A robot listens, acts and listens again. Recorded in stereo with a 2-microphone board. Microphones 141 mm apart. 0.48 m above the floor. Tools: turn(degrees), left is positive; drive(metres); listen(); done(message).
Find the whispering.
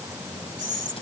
turn(degrees=-70)
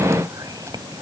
turn(degrees=-30)
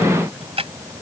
listen()
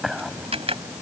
done("Found it: whispering, straight ahead.")